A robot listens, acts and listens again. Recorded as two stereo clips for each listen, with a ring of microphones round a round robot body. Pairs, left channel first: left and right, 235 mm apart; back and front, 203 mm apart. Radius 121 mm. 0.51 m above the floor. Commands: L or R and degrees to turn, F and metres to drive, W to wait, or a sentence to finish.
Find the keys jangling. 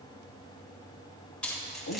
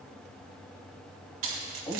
Facing the keys jangling.